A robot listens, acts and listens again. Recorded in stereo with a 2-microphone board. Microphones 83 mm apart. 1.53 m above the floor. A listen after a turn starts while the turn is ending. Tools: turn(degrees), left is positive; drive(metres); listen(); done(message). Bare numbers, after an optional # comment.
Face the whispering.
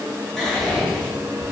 turn(30)
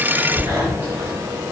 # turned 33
# So it is at 25° right.
turn(-25)
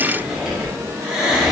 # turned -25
done("Found it: whispering, straight ahead, under 1 m away.")